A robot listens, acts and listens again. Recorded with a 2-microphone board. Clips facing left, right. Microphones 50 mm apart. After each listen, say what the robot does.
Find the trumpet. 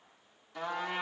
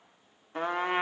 Turn 40° right.
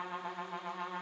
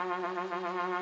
Turn 100° right.
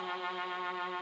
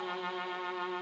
Found it: a trumpet, straight ahead, 1 to 2 m away.